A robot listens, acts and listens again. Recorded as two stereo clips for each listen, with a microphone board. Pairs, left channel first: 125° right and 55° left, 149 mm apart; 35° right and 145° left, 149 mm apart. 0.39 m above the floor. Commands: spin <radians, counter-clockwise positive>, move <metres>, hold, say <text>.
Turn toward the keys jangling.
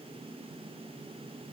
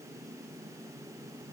hold
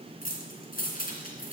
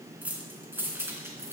spin -2.44
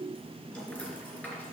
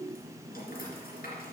spin -0.79
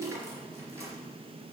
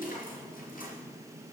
spin -0.26
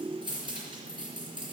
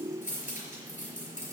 say Facing the keys jangling, over 4 m away.